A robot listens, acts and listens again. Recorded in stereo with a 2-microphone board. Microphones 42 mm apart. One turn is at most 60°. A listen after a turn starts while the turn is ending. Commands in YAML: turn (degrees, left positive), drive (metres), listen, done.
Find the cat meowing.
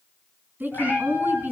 turn: 45
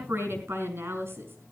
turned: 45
listen: true
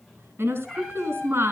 done: "Facing the cat meowing, over 4 m away."